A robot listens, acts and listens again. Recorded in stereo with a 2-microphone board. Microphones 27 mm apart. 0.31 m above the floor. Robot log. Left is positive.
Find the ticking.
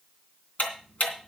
note: The ticking: about 65° left or 115° left.
cmd yaw +65
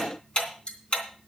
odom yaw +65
note: So it is at 40° left.
cmd yaw +40
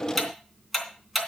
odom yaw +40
end: Found it: ticking, straight ahead.